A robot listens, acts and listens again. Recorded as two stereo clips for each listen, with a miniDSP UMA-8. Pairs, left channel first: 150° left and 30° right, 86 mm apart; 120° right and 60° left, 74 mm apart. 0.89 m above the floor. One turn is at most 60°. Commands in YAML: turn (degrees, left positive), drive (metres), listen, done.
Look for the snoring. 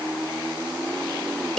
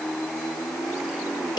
listen: true
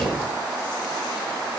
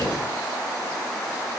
listen: true
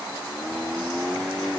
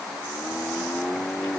done: "I can't make out snoring to turn to."